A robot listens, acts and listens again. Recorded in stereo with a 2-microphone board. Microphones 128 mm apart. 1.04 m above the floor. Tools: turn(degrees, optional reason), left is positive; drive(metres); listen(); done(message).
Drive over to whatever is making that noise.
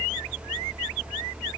listen()
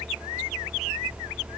listen()
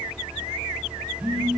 turn(degrees=-30, reason="The phone buzzing: about 30° right or 150° right.")
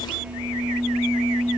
drive(metres=1.0)
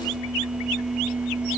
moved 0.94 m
drive(metres=1.0)
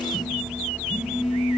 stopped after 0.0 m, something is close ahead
done("I am next to the phone buzzing.")